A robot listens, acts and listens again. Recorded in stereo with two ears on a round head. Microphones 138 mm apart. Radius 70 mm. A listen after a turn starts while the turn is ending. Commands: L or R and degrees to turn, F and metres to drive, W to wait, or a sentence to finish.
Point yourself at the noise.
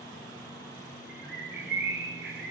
R60
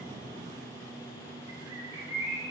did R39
R20
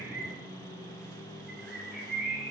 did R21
Found it: a bird, straight ahead.